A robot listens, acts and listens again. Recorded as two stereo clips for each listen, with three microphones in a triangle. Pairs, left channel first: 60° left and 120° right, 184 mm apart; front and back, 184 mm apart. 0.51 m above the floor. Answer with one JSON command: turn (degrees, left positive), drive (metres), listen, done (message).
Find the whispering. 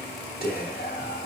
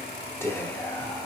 {"turn": 75}
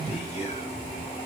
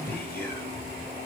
{"turn": 10}
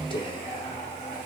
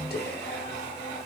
{"listen": true}
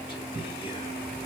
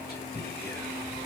{"done": "Facing the whispering."}